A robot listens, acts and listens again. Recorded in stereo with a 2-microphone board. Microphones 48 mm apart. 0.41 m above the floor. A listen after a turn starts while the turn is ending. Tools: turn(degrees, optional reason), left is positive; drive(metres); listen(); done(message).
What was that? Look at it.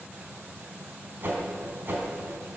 turn(degrees=-40, reason="The whoosh: about 40° right or 140° right.")
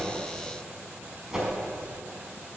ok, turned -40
turn(degrees=-10, reason="So it is at 10° right.")
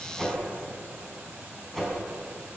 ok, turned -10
done("Found it: a whoosh, straight ahead.")